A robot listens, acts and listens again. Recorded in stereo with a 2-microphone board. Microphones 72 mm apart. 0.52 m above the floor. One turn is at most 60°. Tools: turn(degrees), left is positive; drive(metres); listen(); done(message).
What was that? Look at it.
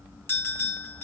turn(degrees=30)
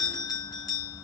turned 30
turn(degrees=60)
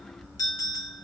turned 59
turn(degrees=60)
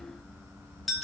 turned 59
done("Found it: a bell, straight ahead.")